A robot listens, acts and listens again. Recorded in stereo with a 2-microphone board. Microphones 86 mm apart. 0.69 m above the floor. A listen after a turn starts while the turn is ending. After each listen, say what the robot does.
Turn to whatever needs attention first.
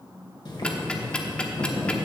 Keep listening.
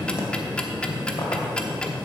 Keep listening.
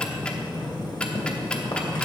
I can't make out anything urgent to turn to.